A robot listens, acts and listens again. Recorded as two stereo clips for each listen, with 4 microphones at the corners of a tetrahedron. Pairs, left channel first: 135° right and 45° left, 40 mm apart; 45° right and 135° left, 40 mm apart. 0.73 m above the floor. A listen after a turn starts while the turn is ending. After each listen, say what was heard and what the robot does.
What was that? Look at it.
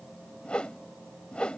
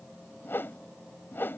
The whoosh: 70° right. Turn 70° right.
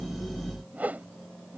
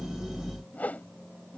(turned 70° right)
Facing the whoosh.